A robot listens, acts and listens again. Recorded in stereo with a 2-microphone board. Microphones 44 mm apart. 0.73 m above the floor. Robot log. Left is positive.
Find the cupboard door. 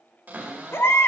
note: The cupboard door: about 40° right or 140° right.
cmd yaw -40
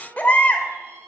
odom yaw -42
note: So it is at 95° right.
cmd yaw -95
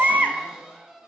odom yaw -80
note: The cupboard door is now 15° right.
cmd yaw -15
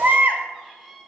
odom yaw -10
end: Facing the cupboard door, 2 to 4 m away.